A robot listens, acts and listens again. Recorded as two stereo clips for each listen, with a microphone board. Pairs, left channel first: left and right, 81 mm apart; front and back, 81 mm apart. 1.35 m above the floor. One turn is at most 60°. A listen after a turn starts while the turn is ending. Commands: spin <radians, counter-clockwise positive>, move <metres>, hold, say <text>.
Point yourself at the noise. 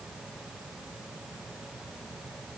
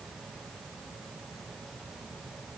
hold
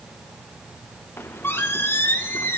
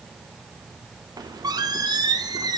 spin 1.05
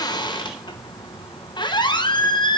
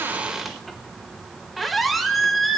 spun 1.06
spin 1.05
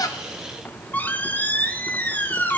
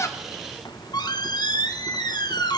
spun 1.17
spin 0.44
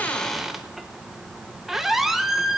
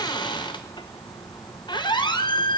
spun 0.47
say Found it: a squeak, straight ahead, under 1 m away.